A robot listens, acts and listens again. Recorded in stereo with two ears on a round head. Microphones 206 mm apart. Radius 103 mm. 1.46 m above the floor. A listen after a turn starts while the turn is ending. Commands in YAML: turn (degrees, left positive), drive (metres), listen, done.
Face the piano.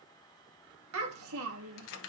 listen: true
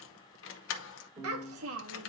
turn: -20
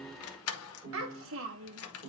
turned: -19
turn: -140
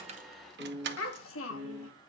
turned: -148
turn: 10
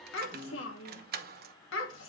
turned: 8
done: "Facing the piano, 1 to 2 m away."